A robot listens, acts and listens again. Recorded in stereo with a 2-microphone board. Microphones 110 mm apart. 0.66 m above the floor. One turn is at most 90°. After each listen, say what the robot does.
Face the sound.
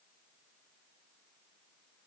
Keep listening.
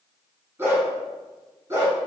Turn 25° right.
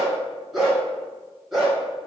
Facing the dog barking, over 4 m away.